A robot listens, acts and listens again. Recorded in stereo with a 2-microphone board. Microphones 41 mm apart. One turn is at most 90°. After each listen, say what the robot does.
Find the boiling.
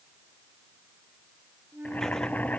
Turn 40° left.
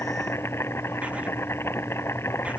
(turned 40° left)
Turn 90° left.
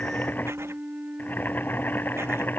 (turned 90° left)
Turn 50° left.
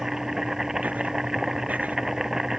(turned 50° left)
Turn 10° right.
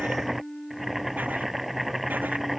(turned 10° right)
Facing the boiling.